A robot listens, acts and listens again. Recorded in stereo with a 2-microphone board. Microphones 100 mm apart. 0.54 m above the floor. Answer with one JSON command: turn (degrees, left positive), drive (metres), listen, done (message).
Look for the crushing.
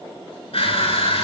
{"turn": 75}
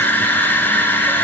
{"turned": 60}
{"turn": 20}
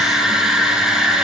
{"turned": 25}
{"done": "Facing the crushing."}